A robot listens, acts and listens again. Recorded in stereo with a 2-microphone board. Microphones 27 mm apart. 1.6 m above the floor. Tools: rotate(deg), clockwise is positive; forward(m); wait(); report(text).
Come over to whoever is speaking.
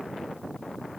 wait()
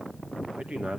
rotate(55)
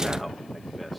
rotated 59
forward(1.0)
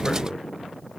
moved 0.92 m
forward(1.0)
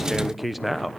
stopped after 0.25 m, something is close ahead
report("Arrived at the man speaking, straight ahead.")